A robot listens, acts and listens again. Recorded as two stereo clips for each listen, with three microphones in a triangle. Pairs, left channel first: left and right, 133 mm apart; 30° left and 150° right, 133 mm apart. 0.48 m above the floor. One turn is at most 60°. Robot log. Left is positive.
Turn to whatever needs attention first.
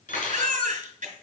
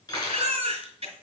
note: The baby crying: 110° right.
cmd yaw -60
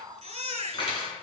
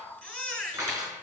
note: The baby crying is now 55° right.
cmd yaw -55
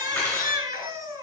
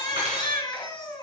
note: The baby crying is now 30° right.
cmd yaw -30
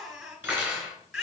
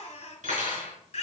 end: Found it: a baby crying, straight ahead, 2 to 4 m away.